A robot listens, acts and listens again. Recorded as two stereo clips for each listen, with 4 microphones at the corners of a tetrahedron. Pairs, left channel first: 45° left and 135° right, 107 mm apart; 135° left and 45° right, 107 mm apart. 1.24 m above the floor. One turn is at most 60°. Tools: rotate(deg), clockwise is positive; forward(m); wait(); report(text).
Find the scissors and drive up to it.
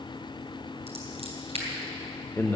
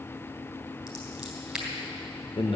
rotate(60)
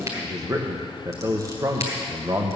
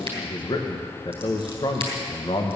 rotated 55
rotate(60)
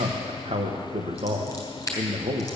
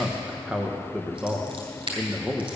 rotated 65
rotate(15)
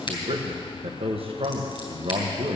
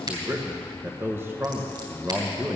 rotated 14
forward(1.0)
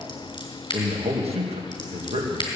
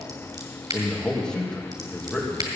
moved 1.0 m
forward(1.0)
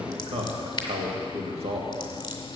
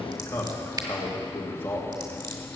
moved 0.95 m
forward(1.0)
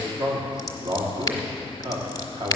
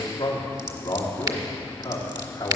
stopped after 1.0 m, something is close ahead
report("Arrived at the scissors, straight ahead.")